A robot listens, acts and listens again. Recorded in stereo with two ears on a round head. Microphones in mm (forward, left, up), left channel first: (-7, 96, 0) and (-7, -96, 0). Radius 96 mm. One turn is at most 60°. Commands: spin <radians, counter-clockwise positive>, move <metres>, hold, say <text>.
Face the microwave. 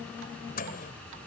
spin 0.70
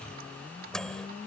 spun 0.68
say Found it: a microwave, straight ahead.